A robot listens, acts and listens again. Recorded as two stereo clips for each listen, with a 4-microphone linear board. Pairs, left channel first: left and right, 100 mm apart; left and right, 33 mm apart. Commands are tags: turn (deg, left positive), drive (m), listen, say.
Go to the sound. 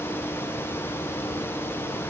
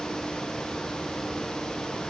<listen/>
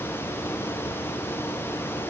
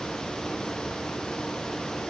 <listen/>
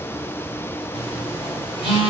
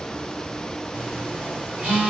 <turn deg="-75"/>
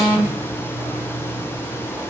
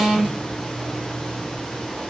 <turn deg="-20"/>
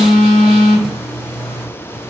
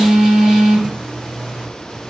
<drive m="1.0"/>
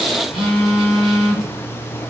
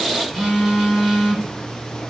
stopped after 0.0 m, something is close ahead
<say>Blocked. The phone buzzing is further on, straight ahead.</say>